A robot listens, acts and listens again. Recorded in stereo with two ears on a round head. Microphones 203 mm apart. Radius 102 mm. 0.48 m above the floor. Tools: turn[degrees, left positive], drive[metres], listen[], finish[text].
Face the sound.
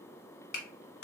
Thought: The clap: about 45° left or 135° left.
Action: turn[45]
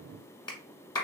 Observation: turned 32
Thought: So it is at 20° left.
Action: turn[20]
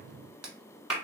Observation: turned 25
Action: finish[Found it: a clap, straight ahead.]